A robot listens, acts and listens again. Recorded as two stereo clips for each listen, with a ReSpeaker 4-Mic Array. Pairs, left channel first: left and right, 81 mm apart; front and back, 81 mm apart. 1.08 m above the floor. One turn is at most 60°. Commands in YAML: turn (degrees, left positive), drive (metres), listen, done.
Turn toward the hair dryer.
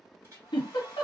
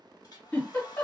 turn: -35
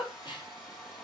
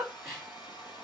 done: "Found it: a hair dryer, straight ahead."